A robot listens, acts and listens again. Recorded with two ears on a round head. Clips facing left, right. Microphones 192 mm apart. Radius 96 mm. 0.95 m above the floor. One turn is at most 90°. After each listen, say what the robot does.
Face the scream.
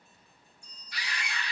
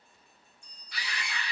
Turn 55° right.
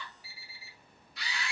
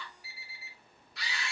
Turn 60° right.
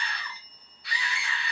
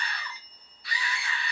Found it: a scream, straight ahead.